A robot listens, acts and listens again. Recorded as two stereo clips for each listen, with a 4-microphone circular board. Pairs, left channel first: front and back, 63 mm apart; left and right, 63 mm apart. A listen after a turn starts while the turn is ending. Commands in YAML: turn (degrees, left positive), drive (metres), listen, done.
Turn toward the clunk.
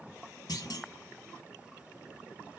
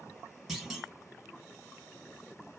done: "Facing the clunk."